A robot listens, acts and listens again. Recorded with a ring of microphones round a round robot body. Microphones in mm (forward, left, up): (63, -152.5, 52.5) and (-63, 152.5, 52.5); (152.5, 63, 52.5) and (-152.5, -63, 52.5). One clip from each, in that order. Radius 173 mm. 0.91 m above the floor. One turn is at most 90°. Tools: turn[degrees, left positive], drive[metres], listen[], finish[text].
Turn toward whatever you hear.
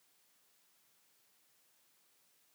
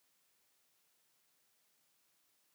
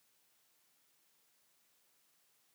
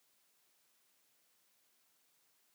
Action: listen[]
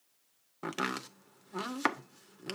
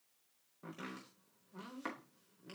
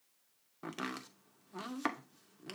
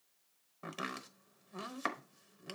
Thought: The chopping: 65° right.
Action: turn[-65]
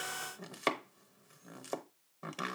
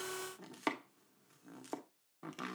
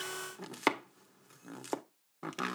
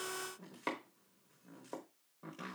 Thought: The chopping is now 20° left.
Action: turn[20]
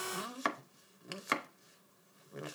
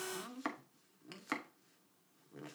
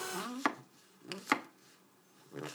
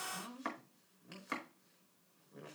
Action: finish[Found it: chopping, straight ahead, under 1 m away.]